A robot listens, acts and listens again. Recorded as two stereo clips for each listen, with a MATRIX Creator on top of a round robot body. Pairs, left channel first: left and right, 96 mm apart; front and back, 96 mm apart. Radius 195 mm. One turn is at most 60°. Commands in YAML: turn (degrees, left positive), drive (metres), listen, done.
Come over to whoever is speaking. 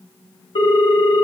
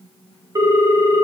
listen: true
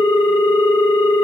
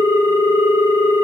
listen: true
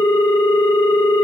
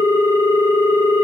done: "I can't make out anyone speaking to turn to."